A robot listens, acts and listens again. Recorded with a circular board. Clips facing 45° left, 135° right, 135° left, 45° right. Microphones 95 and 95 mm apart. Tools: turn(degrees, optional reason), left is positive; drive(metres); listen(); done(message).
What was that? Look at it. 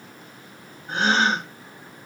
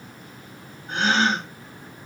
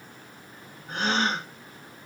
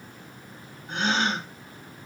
turn(degrees=90, reason="The gasp: 90° left.")
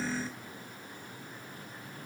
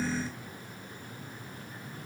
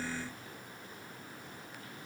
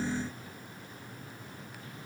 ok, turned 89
done("Facing where the gasp came from. I can't hear it now.")